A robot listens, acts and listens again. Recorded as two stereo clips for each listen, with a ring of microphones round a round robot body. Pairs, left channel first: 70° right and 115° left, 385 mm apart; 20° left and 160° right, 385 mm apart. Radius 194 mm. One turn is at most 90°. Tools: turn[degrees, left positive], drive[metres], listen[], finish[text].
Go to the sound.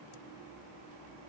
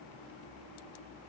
Action: listen[]
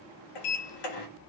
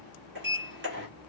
Thought: The sliding door: 95° right.
Action: turn[-90]
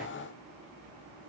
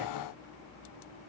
Action: listen[]
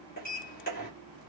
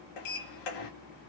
Action: drive[1.0]
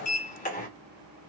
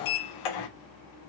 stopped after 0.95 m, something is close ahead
Action: finish[I am next to the sliding door.]